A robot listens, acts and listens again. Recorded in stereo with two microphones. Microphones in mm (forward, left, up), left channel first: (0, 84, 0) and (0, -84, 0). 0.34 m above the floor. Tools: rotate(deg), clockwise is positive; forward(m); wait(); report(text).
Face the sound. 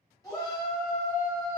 rotate(-20)
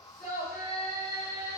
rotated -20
rotate(-130)
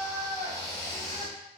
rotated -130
rotate(-30)
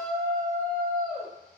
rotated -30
rotate(-10)
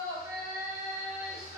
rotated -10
report("Found it: a shout, straight ahead, 1 to 2 m away.")